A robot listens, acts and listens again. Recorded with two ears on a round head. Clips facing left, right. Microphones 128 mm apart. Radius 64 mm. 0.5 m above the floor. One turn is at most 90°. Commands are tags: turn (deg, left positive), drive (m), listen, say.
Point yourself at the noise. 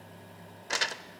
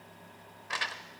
<turn deg="50"/>
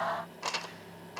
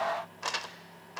<say>Found it: crumpling, straight ahead, under 1 m away.</say>